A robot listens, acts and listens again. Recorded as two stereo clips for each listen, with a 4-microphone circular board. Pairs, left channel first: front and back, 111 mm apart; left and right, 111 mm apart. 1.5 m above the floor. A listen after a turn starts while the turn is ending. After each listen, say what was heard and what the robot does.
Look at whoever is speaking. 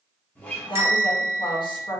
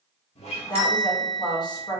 The woman speaking: 40° left. Turn 40° left.
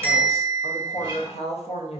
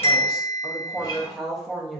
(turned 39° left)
Found it: a woman speaking, straight ahead, under 1 m away.